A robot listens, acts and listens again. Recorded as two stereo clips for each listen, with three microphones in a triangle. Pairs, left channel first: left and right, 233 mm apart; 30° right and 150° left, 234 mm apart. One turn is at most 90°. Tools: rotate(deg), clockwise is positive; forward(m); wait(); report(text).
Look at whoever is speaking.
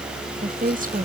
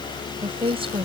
rotate(90)
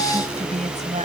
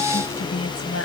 rotate(30)
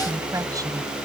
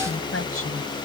wait()
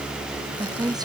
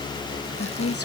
rotate(15)
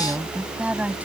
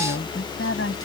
report("Facing the woman speaking.")